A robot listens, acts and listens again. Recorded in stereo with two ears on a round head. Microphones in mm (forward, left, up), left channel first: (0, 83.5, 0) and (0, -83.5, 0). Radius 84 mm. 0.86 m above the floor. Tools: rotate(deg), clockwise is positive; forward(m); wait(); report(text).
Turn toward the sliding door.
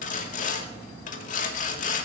wait()
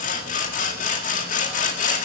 wait()
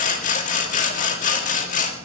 report("I can't make out a sliding door to turn to.")